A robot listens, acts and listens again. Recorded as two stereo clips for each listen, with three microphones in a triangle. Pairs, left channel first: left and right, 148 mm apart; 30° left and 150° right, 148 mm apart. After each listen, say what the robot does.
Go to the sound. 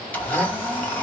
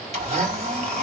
Turn 170° left.
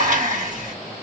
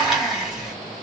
Turn 60° right.
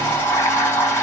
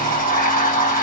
Turn 15° left.
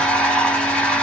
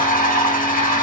Drive 1.0 m forward.
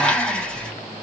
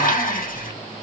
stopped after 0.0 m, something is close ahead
Something is in my way. I am facing the blender but have not reached it.